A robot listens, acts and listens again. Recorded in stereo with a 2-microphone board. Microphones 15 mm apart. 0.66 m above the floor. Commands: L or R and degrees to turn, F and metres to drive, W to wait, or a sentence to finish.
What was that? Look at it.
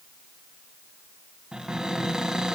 R50
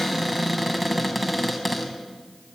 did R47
Facing the cupboard door.